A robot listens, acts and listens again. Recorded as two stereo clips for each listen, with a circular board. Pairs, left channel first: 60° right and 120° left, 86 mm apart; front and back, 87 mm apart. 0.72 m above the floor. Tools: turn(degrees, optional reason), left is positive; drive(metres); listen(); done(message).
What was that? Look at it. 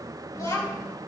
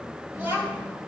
turn(degrees=-110, reason="The child speaking: 110° right.")
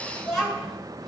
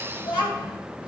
turn(degrees=25, reason="The child speaking is now 25° left.")
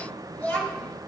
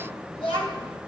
turn(degrees=10, reason="The child speaking is now 10° left.")
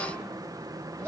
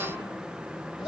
turn(degrees=15, reason="The child speaking is now 15° left.")
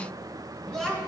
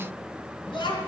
turn(degrees=15, reason="The child speaking is now 15° left.")
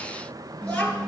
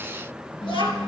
turn(degrees=10, reason="The child speaking is now 10° left.")
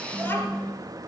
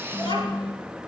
done("Facing the child speaking.")